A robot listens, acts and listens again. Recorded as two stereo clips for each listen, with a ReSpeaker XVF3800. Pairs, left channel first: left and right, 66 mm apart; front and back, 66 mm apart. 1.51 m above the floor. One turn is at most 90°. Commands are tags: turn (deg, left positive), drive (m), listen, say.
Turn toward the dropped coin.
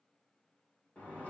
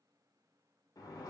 <listen/>
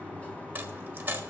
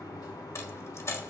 <turn deg="-30"/>
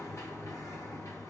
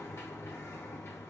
<say>I heard a dropped coin from this way, but can't make it out now.</say>